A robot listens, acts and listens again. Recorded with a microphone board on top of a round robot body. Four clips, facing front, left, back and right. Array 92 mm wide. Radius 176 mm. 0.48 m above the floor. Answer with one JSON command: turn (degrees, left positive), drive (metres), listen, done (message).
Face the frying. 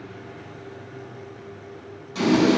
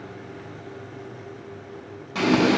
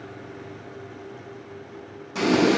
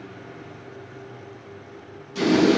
{"turn": 110}
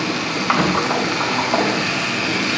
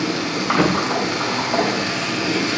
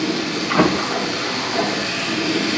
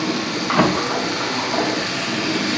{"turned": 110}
{"done": "Found it: frying, straight ahead."}